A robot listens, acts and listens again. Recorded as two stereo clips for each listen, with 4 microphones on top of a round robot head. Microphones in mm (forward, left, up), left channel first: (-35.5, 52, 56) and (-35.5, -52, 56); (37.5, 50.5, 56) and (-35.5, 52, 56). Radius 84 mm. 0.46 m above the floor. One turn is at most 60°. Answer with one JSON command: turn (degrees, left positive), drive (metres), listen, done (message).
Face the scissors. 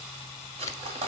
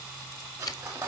{"turn": 30}
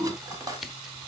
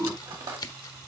{"done": "Facing the scissors, 1 to 2 m away."}